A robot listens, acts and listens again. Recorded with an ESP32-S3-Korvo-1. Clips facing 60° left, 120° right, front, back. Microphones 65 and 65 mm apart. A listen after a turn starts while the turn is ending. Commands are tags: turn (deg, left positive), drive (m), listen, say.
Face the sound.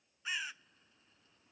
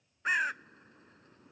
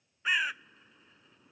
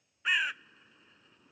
<turn deg="-90"/>
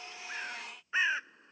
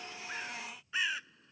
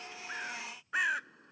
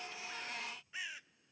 <say>Found it: a bird, straight ahead.</say>